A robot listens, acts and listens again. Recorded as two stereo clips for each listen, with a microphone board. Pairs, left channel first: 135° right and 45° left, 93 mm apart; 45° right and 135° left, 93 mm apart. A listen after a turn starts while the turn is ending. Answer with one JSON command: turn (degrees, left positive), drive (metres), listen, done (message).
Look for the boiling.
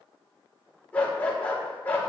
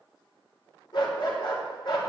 {"listen": true}
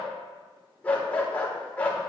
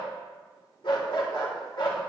{"listen": true}
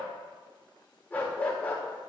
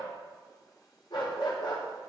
{"done": "I can't make out boiling to turn to."}